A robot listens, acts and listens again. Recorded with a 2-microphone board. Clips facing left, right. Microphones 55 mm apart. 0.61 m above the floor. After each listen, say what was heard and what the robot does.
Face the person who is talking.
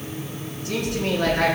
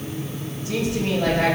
Turn 90° left.
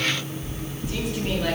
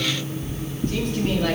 Keep listening.
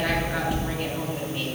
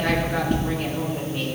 Keep listening.
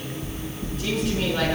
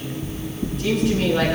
I heard a woman speaking from this way, but can't make it out now.